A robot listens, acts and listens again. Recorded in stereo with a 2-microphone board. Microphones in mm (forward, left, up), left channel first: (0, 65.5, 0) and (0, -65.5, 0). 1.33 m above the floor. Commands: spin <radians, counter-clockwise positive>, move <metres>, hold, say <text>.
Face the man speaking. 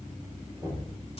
hold
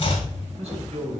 spin -1.05
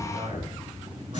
spin -0.96
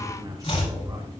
spin -0.52
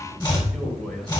say Found it: a man speaking, straight ahead.